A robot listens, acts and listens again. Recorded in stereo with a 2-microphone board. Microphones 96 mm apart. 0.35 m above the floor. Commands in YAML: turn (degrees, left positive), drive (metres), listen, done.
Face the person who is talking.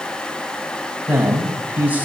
turn: -20
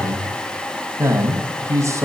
turn: -140
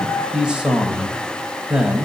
turn: -10
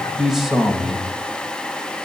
done: "Found it: a man speaking, straight ahead, 1 to 2 m away."